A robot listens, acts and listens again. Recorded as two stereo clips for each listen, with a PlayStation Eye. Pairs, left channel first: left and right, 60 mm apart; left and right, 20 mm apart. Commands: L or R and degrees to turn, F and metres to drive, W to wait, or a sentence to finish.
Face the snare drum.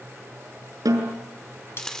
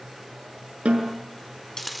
R90
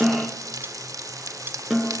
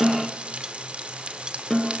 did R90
Facing the snare drum.